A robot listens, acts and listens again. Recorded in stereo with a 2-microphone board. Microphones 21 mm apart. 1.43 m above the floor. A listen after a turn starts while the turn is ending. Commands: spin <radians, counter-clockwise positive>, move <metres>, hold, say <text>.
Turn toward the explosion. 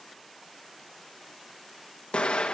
spin 1.22
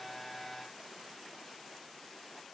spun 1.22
hold
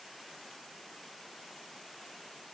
say I heard an explosion, but can't make it out now. It was about straight ahead or 40° left.